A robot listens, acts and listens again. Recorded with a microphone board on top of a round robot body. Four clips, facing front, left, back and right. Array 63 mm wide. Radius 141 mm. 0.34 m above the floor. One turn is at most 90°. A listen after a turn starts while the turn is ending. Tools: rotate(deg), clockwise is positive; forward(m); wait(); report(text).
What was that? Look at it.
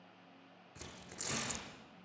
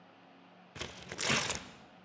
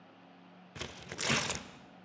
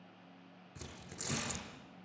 rotate(-90)
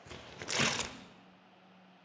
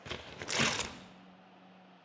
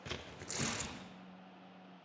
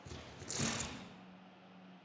rotate(-50)
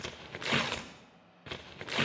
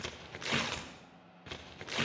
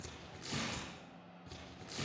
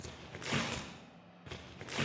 rotate(-10)
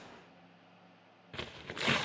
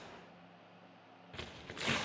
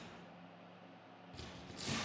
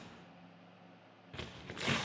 report("Found it: tearing paper, straight ahead.")